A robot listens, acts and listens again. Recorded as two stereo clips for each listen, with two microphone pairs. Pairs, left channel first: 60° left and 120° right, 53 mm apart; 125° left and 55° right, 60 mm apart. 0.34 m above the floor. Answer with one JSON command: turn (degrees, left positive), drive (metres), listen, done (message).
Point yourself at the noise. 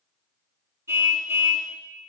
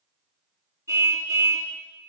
{"turn": -85}
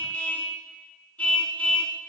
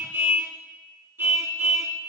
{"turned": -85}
{"done": "Found it: a car horn, straight ahead."}